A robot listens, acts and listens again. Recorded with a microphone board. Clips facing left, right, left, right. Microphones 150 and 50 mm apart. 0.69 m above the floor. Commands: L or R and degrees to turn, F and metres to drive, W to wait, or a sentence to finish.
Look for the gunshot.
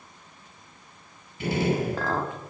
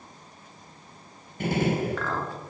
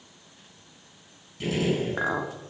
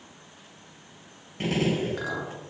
R55
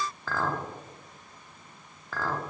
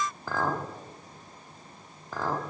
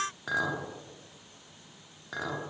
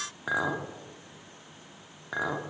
W
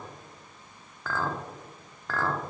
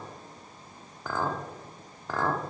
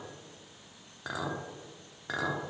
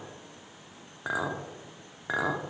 I heard a gunshot, but can't make it out now. It was about straight ahead or 70° right.